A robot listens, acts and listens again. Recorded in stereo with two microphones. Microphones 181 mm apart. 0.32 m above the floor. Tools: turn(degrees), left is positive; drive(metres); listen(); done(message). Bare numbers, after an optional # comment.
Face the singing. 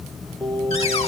turn(30)
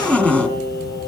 # So it is at 110° left.
turn(110)
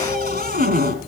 listen()
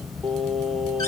done("Found it: singing, straight ahead.")